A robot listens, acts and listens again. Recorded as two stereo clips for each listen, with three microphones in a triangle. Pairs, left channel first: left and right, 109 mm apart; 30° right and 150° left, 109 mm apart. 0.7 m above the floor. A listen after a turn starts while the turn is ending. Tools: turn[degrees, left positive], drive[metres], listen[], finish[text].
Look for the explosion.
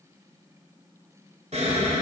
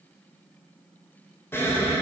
Thought: The explosion: 100° right.
Action: turn[-100]
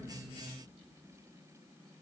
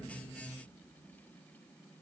Action: finish[I heard an explosion from this way, but can't make it out now.]